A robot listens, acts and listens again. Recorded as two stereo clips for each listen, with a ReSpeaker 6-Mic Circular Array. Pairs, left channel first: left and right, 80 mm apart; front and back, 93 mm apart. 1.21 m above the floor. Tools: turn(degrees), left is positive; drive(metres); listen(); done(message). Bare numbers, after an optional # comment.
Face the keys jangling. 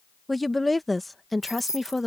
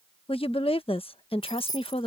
# The keys jangling: 45° left.
turn(45)
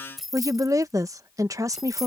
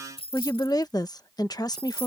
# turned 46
done("Facing the keys jangling.")